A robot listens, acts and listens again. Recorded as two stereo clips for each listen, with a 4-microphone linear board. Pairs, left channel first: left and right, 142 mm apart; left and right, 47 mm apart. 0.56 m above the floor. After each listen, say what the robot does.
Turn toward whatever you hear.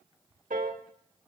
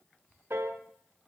Turn 65° right.
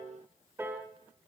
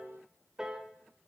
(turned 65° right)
Turn 20° right.
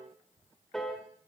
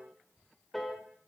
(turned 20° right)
Facing the piano, 1 to 2 m away.